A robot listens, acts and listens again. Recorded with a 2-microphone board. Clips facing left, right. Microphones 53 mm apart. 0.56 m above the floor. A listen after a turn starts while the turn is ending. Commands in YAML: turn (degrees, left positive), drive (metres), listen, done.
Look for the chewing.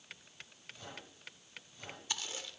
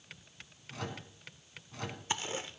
turn: -30
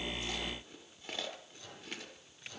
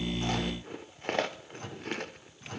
turn: -120
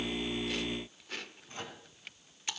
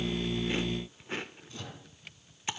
turn: -30
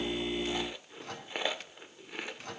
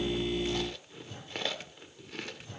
turn: 15
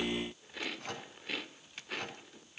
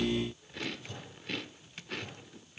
done: "Found it: chewing, straight ahead, under 1 m away."